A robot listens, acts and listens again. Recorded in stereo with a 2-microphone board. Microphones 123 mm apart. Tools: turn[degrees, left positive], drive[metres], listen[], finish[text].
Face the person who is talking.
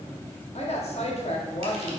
Thought: The woman speaking: about 60° left or 120° left.
Action: turn[60]
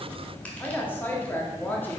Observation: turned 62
Thought: So it is at 20° left.
Action: turn[20]
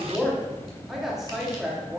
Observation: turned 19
Action: finish[Found it: a woman speaking, straight ahead.]